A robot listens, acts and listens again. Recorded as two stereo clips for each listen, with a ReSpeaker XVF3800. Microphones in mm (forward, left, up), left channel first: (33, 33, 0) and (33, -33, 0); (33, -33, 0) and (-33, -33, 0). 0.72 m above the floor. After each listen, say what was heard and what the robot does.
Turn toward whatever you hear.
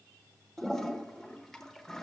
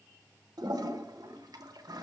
The toilet flushing: 175° left. Turn 175° left.
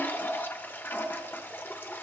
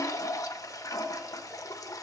The toilet flushing is now 30° left. Turn 30° left.
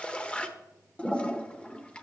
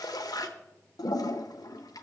The toilet flushing is now 15° left. Turn 15° left.
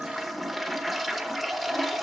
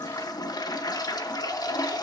Found it: a toilet flushing, straight ahead, under 1 m away.